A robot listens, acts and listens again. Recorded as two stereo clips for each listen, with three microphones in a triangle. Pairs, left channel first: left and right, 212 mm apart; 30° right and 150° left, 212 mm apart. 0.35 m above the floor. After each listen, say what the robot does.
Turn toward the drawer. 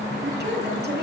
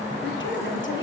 Keep listening.
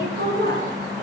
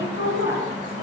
Keep listening.
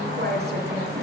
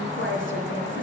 I can't make out a drawer, only a woman speaking.